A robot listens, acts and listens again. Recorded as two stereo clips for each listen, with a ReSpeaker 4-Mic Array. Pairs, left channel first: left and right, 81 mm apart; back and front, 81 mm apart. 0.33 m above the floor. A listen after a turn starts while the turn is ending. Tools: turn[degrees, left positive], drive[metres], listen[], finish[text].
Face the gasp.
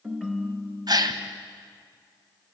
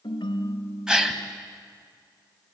Thought: The gasp: 80° right.
Action: turn[-80]
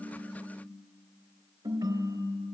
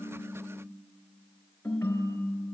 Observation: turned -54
Thought: Nothing new. It was at 25° right.
Action: turn[-25]
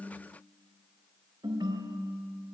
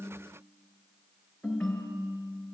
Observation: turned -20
Action: finish[I heard a gasp from this way, but can't make it out now.]